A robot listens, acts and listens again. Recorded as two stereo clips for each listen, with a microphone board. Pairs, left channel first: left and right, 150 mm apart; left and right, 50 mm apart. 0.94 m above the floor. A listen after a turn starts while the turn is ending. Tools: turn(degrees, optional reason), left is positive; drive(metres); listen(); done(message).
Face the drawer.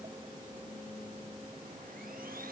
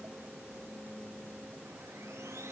listen()
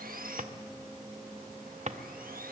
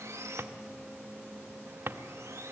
turn(degrees=-50, reason="The drawer: about 50° right or 130° right.")
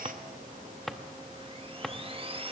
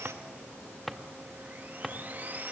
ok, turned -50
done("Found it: a drawer, straight ahead.")